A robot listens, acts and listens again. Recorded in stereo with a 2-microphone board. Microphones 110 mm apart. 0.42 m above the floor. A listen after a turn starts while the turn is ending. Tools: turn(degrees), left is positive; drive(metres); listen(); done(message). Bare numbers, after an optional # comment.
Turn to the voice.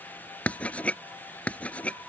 listen()
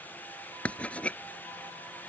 listen()
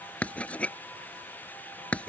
done("I can't make out anyone speaking to turn to.")